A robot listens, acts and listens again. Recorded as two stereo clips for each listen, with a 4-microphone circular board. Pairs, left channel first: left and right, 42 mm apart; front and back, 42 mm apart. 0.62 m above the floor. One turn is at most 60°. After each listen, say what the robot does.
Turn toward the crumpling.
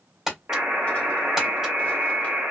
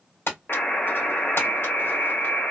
Turn 10° right.
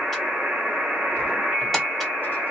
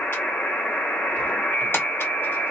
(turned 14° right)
Keep listening.
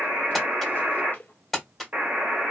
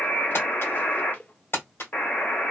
Facing the crumpling.